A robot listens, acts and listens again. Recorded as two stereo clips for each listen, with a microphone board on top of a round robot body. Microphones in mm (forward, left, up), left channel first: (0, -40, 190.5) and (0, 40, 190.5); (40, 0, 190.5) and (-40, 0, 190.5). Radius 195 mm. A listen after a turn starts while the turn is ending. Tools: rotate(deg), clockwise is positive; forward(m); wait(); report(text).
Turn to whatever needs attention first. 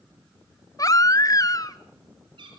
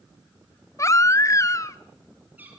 rotate(50)
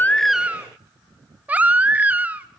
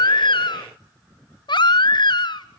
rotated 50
rotate(-20)
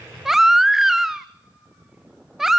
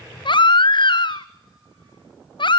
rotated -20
report("Facing the baby crying.")